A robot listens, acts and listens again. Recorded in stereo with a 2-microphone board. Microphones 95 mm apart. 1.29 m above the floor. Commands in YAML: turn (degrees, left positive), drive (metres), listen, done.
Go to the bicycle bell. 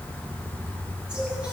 listen: true
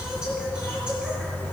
listen: true
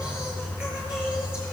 done: "I can't make out a bicycle bell, only singing."